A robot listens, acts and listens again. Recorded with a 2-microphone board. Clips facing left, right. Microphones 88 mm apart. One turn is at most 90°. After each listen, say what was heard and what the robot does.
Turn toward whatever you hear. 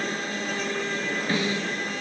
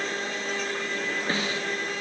The snare drum: about 25° right or 155° right. Turn 25° right.
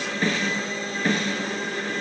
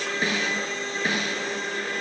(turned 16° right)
So it is at 10° right. Turn 10° right.
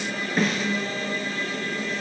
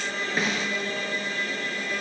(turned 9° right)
Found it: a snare drum, straight ahead.